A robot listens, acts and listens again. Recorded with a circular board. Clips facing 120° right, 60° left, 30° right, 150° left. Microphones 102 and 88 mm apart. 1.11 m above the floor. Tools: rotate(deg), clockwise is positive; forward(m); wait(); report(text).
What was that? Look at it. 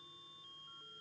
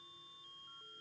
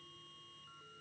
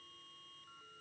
wait()
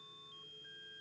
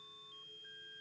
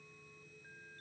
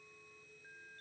wait()
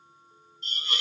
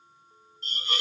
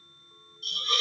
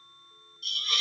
rotate(-20)
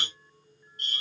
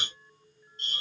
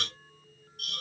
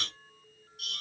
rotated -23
report("Found it: a hiss, straight ahead.")